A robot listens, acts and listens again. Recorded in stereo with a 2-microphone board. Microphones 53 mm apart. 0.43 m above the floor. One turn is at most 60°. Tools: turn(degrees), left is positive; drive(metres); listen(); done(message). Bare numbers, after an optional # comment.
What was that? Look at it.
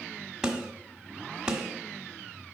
turn(-30)
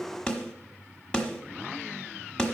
# So it is at 15° left.
turn(15)
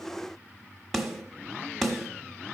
done("Found it: a snare drum, straight ahead, 1 to 2 m away.")